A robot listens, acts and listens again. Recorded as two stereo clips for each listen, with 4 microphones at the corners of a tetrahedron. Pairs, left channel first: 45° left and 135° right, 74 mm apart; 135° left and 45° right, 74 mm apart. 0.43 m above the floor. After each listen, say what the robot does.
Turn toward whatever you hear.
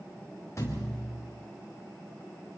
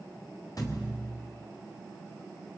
Turn 95° left.
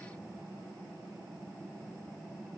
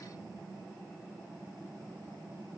Facing where the thud came from. I can't hear it now.